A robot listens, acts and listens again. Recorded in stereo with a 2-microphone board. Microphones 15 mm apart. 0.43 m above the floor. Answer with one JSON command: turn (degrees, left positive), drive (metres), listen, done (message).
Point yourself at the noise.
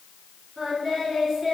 {"turn": -20}
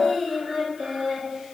{"turn": -140}
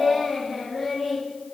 {"done": "Facing the singing."}